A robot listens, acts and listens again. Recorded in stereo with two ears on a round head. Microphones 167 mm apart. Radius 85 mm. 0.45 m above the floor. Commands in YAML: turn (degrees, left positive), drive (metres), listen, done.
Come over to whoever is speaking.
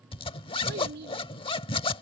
turn: -65
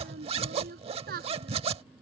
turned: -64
turn: -50
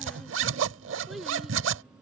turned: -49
drive: 1.0
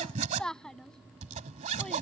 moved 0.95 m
drive: 1.0
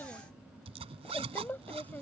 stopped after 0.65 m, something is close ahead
turn: 10
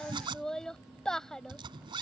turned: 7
done: "I am next to the child speaking."